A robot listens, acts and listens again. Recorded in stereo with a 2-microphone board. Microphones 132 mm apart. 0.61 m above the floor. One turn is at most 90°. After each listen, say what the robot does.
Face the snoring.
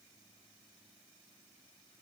Keep listening.
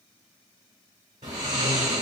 Turn 70° right.
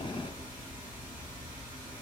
Keep listening.
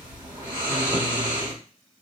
Turn 40° right.
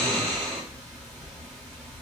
Found it: snoring, straight ahead.